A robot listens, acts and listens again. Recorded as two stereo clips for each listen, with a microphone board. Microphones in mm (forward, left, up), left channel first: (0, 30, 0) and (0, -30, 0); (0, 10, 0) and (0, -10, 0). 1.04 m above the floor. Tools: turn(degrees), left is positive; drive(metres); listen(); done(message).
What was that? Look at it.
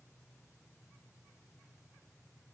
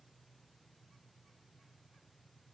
listen()
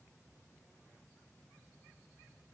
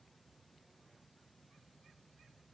listen()
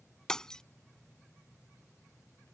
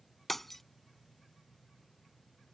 turn(degrees=30)
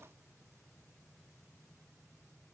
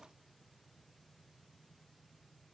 listen()
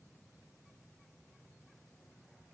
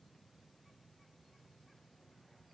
done("I heard breaking glass, but can't make it out now. It was about 20° right or 140° left.")